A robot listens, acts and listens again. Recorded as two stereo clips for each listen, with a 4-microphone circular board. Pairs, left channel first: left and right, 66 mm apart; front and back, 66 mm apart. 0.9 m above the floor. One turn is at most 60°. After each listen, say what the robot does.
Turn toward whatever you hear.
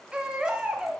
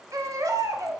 Turn 60° right.
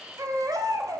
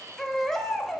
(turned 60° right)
Turn 60° right.
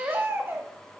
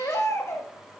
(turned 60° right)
Turn 35° right.
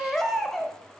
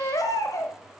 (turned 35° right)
Facing the baby crying.